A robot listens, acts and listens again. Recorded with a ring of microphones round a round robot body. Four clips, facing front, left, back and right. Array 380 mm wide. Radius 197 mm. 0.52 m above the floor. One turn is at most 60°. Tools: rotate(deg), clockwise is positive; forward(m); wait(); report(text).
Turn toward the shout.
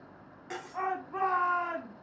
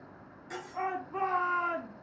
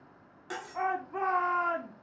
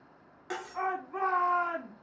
rotate(15)
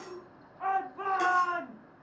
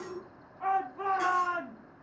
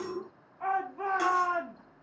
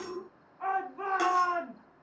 report("Found it: a shout, straight ahead.")